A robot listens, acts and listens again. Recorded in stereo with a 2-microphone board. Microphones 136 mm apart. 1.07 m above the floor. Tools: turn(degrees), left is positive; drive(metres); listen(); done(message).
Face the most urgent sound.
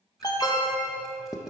turn(degrees=30)
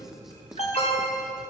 turn(degrees=115)
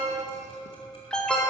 turn(degrees=10)
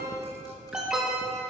done("Facing the alarm, 1 to 2 m away.")